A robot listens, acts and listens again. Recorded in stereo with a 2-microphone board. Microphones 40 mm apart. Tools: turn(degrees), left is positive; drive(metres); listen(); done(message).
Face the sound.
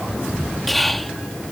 turn(degrees=30)
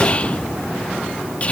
turn(degrees=150)
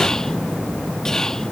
listen()
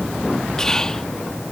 turn(degrees=20)
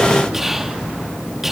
done("Found it: whispering, straight ahead.")